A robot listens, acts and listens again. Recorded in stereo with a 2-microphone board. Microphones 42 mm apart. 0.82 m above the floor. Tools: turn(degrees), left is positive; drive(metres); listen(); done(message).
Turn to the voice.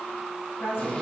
turn(degrees=60)
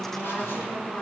turn(degrees=55)
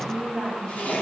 done("Facing the woman speaking.")